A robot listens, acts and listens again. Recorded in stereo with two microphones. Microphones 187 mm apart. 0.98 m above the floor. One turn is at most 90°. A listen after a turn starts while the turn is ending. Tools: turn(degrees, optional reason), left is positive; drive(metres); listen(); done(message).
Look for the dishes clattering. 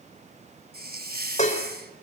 turn(degrees=40, reason="The dishes clattering: about 40° left or 140° left.")
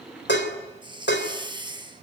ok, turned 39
turn(degrees=90, reason="So it is at 100° left.")
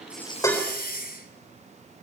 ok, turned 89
turn(degrees=10, reason="The dishes clattering is now 10° left.")
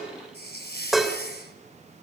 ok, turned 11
done("Facing the dishes clattering, 2 to 4 m away.")